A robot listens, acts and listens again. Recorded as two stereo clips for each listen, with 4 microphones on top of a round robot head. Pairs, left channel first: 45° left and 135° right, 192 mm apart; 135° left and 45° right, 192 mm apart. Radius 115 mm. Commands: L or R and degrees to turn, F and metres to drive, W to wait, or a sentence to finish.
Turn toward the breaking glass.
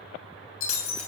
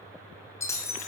L55
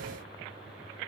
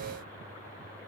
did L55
Facing where the breaking glass came from. I can't hear it now.